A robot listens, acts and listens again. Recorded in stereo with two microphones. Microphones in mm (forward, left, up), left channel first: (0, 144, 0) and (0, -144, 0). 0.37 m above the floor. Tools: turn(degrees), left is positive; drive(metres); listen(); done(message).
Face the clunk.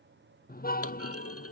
turn(degrees=55)
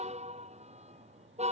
listen()
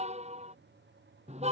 done("I heard a clunk, but can't make it out now. It was about straight ahead or 70° left.")